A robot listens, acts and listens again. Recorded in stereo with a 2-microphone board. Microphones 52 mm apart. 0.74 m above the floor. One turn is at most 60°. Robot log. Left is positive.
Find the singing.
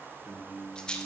note: The singing: about 50° right or 130° right.
cmd yaw -50
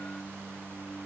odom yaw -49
note: So it is at 15° right.
cmd yaw -15
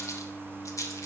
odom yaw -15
note: The singing is now 15° right.
cmd yaw -15
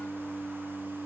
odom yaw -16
note: The singing is now 15° right.
cmd yaw -15
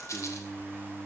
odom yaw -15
note: The singing is now 20° right.
cmd yaw -20
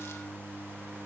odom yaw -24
end: Found it: singing, straight ahead.